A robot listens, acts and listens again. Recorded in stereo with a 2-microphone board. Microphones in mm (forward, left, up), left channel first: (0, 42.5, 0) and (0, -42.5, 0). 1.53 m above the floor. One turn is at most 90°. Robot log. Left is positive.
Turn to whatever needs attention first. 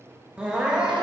cmd yaw -30
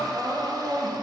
note: So it is at 140° right.
cmd yaw -90
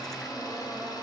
note: Nothing new. It was at 50° right.
cmd yaw -50
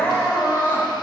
note: The crying is now 30° left.
cmd yaw +30
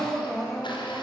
end: Facing the crying.